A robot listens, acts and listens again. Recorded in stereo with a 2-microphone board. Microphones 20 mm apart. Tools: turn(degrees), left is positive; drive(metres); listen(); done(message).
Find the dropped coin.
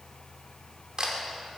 listen()
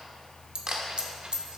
turn(degrees=-50)
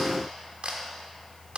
listen()
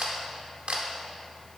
done("I heard a dropped coin, but can't make it out now. It was about straight ahead or 80° right.")